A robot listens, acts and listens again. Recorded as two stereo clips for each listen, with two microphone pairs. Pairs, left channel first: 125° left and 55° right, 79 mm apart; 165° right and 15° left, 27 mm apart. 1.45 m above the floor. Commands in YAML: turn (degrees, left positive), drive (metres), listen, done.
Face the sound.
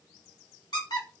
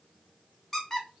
turn: 120
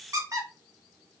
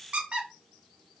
turn: -15
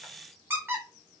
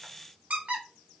done: "Facing the squeak, under 1 m away."